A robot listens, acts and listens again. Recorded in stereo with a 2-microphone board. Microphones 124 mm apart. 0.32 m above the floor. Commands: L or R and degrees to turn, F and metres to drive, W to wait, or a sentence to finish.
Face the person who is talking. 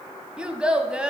R30
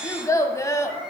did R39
L30
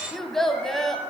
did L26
Facing the child speaking, 1 to 2 m away.